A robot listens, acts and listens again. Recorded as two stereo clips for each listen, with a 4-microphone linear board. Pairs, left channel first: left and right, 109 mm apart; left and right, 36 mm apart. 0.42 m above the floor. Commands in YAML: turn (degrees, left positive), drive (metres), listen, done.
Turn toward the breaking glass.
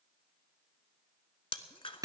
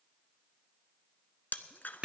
turn: 55
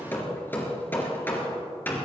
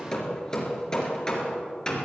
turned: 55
listen: true
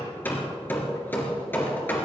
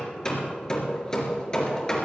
done: "I heard breaking glass, but can't make it out now. It was about straight ahead or 70° left."